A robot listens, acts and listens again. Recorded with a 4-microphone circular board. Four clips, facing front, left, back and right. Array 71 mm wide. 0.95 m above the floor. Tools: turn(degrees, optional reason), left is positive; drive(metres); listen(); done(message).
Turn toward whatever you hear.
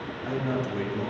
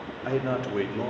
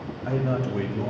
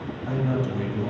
turn(degrees=95, reason="The man speaking: 95° left.")
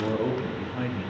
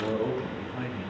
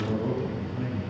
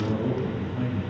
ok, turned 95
turn(degrees=20, reason="The man speaking is now 20° left.")
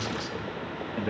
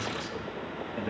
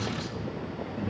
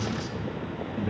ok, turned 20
turn(degrees=25, reason="The man speaking is now 25° left.")
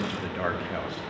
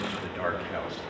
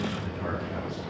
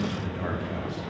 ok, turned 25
turn(degrees=35, reason="The man speaking is now 35° left.")
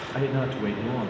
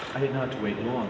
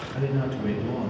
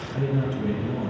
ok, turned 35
turn(degrees=60, reason="The man speaking is now 60° left.")
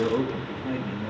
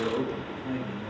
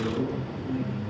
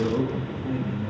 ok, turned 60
done("Found it: a man speaking, straight ahead, 1 to 2 m away.")